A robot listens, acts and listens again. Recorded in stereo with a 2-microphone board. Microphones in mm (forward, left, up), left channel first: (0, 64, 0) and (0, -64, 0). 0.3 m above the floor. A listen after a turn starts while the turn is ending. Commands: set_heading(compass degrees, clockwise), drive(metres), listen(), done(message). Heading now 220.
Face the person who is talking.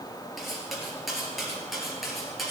listen()
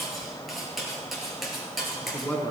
set_heading(190)
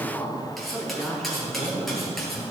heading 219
set_heading(189)
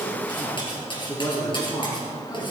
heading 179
set_heading(34)
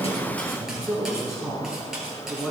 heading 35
done("Facing the man speaking, over 4 m away.")